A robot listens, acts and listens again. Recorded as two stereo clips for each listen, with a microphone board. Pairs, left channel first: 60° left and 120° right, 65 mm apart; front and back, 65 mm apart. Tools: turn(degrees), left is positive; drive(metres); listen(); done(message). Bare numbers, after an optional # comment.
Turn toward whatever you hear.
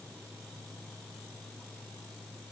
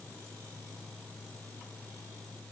listen()
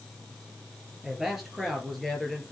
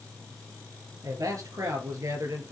# The man speaking: 150° left.
turn(150)
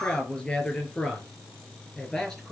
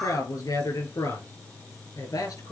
# The man speaking is now 20° right.
turn(-20)
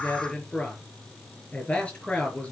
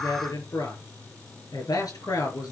# The man speaking is now 10° right.
turn(-10)
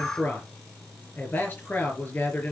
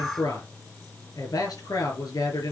done("Facing the man speaking, over 4 m away.")